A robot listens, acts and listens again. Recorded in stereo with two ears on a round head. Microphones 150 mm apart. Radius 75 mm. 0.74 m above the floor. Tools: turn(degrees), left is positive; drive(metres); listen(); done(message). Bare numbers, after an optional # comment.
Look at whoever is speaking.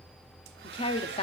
# The woman speaking: about 35° left or 145° left.
turn(35)
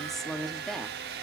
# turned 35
done("Facing the woman speaking.")